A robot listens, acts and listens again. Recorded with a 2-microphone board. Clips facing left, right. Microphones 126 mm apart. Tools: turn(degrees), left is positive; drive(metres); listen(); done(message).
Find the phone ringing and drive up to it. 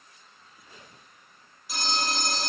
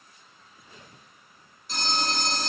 turn(degrees=30)
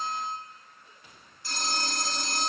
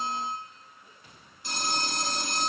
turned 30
turn(degrees=-20)
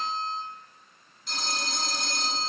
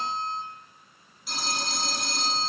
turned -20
drive(metres=1.0)
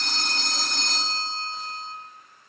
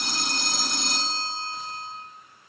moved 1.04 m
turn(degrees=-10)
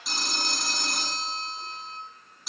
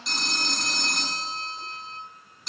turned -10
drive(metres=1.0)
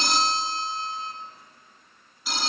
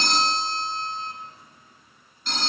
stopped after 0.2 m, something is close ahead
done("Arrived at the phone ringing, straight ahead.")